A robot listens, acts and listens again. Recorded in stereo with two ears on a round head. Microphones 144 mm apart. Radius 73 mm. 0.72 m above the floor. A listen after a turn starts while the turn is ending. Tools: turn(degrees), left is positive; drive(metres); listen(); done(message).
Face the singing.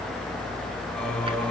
turn(degrees=30)
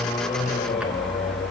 turn(degrees=140)
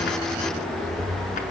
done("Found it: singing, straight ahead.")